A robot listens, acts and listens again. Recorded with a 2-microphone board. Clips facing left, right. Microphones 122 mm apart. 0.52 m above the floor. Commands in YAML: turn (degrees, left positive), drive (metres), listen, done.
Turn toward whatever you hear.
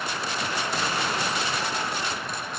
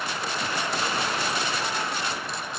listen: true
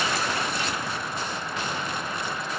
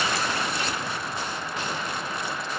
listen: true
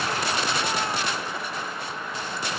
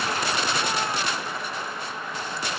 done: "I can't make out anything."